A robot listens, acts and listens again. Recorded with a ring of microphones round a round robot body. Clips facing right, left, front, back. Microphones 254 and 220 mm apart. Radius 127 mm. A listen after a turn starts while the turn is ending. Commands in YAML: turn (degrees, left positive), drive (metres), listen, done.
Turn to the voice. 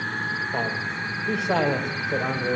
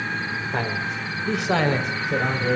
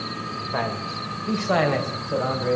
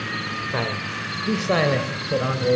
turn: 140
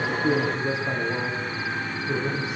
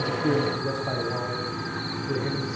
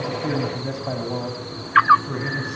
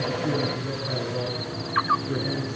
turn: -20
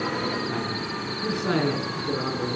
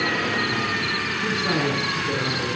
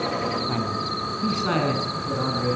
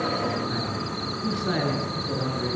done: "Found it: a man speaking, straight ahead, over 4 m away."